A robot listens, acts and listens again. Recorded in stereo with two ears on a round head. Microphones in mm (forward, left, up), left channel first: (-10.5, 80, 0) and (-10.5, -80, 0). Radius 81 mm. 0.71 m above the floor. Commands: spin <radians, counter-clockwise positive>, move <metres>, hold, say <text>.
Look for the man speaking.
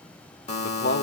spin 1.05
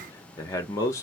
spin 0.35
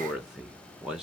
say Found it: a man speaking, straight ahead.